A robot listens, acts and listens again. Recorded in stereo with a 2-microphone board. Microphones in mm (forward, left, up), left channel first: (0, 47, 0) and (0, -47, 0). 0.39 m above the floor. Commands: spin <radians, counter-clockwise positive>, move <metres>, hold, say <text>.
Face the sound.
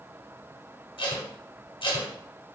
spin 1.13
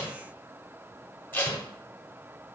spin 0.35
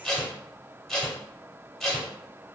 say Found it: tape being pulled, straight ahead, under 1 m away.